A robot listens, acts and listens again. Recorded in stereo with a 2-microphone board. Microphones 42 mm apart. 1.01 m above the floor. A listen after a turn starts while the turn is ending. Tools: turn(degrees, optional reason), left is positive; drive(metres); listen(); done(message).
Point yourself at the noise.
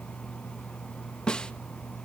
turn(degrees=25, reason="The snare drum: about 25° left or 155° left.")
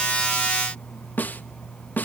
turn(degrees=130, reason="So it is at 130° left.")
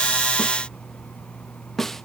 done("Found it: a snare drum, straight ahead.")